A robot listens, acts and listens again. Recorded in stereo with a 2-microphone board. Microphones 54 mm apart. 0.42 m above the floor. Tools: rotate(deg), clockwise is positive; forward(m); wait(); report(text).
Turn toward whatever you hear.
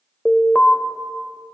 rotate(-25)
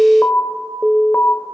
rotate(-125)
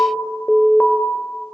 rotate(-30)
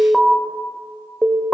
report("Facing the alarm.")